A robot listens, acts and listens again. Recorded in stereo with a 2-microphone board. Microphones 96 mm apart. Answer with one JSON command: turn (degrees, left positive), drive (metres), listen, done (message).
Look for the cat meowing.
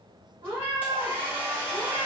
{"turn": -50}
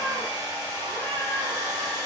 {"listen": true}
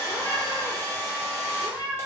{"turn": 45}
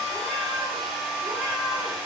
{"turn": 20}
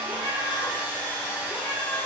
{"done": "Facing the cat meowing."}